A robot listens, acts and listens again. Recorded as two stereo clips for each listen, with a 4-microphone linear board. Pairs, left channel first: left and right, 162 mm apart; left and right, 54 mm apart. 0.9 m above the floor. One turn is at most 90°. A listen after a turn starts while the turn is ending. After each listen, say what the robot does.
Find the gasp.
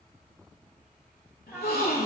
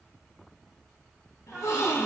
Turn 70° left.
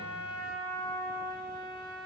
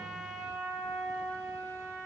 Keep listening.
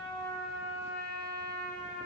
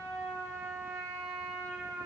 I heard a gasp, but can't make it out now. It was about straight ahead or 40° left.